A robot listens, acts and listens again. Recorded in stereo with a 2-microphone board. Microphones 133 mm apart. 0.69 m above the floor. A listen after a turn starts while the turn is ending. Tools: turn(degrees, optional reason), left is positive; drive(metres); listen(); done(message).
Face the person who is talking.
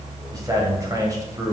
turn(degrees=-30, reason="The man speaking: about 30° right or 150° right.")
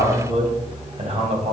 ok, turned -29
turn(degrees=-120, reason="So it is at 120° right.")
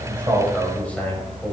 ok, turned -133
turn(degrees=10, reason="The man speaking is now 10° left.")
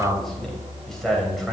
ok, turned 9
done("Found it: a man speaking, straight ahead, 2 to 4 m away.")